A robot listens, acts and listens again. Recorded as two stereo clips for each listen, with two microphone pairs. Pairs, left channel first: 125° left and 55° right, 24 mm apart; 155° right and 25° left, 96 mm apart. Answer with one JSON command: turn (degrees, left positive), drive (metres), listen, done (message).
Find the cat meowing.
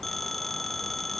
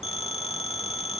{"listen": true}
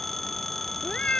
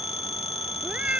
{"turn": 100}
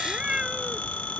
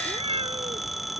{"done": "Facing the cat meowing."}